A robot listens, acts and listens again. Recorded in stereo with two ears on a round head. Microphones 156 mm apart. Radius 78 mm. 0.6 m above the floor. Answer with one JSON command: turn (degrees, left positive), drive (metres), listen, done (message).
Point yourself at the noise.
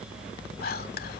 {"turn": 55}
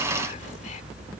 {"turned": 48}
{"listen": true}
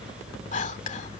{"turn": 55}
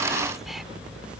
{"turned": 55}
{"listen": true}
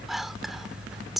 {"done": "Found it: whispering, straight ahead."}